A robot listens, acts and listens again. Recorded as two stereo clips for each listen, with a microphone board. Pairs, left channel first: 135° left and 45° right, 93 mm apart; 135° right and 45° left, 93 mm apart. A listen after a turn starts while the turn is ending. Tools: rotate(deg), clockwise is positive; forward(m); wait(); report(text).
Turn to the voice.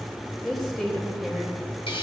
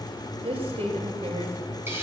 rotate(-50)
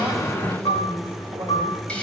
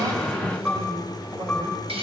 wait()
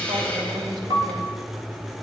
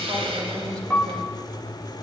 wait()
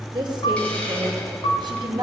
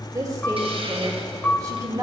report("Found it: a woman speaking, straight ahead.")